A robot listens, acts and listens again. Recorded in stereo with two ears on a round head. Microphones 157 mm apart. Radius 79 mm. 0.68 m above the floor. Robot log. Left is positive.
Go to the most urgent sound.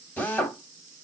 cmd idle
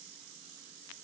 cmd idle
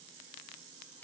end: I can't make out anything urgent, only a drill.